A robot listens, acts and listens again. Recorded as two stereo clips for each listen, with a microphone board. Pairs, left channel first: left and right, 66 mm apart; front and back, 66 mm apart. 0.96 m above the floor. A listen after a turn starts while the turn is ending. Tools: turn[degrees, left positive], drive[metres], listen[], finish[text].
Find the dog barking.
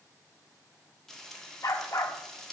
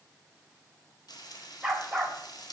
Thought: The dog barking: 95° left.
Action: turn[95]
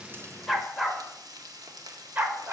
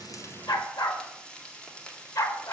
Thought: The dog barking is now 35° right.
Action: turn[-35]
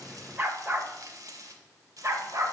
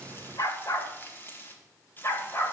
Thought: The dog barking is now 50° right.
Action: turn[-50]
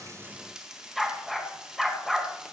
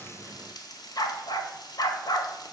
Action: finish[Facing the dog barking.]